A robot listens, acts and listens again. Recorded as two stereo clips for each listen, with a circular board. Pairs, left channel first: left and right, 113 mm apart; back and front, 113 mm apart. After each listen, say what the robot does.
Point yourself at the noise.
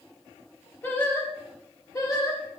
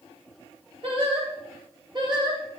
Turn 40° left.
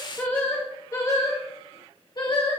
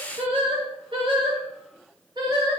Turn 50° left.
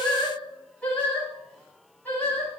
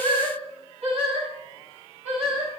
Turn 15° left.
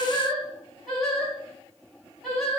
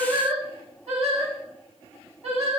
Facing the singing.